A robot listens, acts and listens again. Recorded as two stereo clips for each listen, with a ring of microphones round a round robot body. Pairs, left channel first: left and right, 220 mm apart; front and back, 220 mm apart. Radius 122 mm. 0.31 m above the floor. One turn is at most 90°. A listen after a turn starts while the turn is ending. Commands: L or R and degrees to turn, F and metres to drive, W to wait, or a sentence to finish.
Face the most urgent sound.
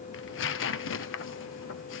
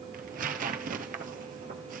W
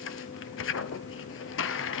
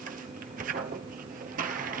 W
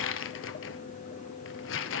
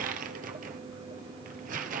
I can't make out anything urgent to turn to.